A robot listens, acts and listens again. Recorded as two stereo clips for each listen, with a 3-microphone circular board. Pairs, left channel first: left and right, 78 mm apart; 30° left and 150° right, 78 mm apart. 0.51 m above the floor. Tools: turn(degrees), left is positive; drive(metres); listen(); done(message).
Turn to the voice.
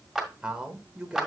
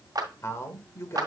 turn(degrees=-15)
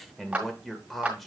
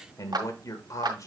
done("Found it: a man speaking, straight ahead.")